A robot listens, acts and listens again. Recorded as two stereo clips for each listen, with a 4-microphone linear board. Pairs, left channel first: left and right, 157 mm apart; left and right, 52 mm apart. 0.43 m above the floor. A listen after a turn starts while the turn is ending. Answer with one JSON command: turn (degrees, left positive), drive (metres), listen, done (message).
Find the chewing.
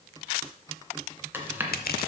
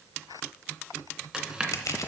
{"turn": -30}
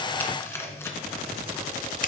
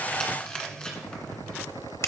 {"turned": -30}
{"turn": 15}
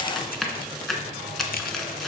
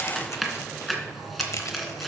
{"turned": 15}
{"done": "Found it: chewing, straight ahead, 1 to 2 m away."}